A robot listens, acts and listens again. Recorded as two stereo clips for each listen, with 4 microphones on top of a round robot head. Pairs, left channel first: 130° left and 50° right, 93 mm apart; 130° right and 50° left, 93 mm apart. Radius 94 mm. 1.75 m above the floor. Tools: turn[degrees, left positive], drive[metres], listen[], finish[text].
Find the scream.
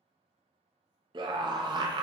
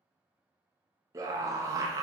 Thought: The scream: 10° right.
Action: turn[-10]
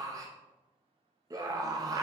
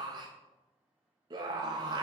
Action: finish[Found it: a scream, straight ahead.]